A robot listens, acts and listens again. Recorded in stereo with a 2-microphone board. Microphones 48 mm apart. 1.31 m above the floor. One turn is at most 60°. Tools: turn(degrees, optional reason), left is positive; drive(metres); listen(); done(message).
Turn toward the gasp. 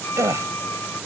turn(degrees=-60)
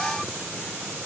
turn(degrees=-30, reason="Nothing new. It was at 30° right.")
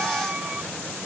done("Facing where the gasp came from. I can't hear it now.")